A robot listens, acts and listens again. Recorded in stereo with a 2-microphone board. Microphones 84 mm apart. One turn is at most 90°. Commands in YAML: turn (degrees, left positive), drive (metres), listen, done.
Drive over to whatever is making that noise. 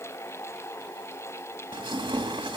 turn: -90
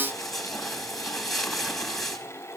drive: 1.0
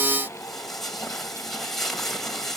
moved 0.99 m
drive: 1.0
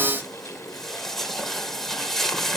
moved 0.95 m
drive: 1.0
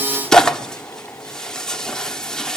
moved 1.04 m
turn: 10
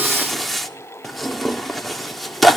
drive: 1.0
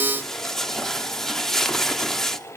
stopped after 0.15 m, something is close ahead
done: "Arrived at the tearing paper, straight ahead."